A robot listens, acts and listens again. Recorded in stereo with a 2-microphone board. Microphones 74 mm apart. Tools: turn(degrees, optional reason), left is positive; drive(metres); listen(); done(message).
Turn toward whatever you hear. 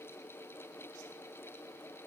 listen()
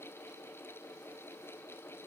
listen()
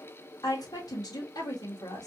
turn(degrees=60, reason="The woman speaking: about 60° left or 120° left.")
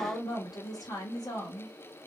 turn(degrees=60, reason="So it is at 60° left.")
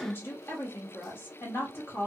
turn(degrees=30, reason="The woman speaking is now 30° left.")
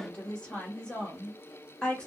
turn(degrees=10, reason="The woman speaking is now 10° left.")
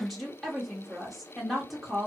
done("Found it: a woman speaking, straight ahead.")